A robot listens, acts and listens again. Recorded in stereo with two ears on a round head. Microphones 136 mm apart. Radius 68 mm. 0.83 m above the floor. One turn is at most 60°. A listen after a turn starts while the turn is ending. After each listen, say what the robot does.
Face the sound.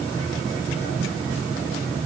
Keep listening.
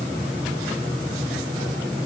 Keep listening.
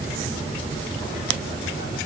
I can't make out anything to turn to.